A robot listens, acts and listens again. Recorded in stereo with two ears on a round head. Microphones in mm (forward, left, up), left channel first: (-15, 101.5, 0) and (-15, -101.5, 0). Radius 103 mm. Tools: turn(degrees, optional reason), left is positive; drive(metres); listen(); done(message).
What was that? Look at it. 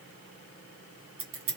turn(degrees=-60, reason="The scissors: about 60° right or 120° right.")
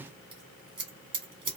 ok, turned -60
turn(degrees=-25, reason="So it is at 25° right.")
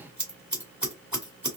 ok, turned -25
done("Found it: scissors, straight ahead.")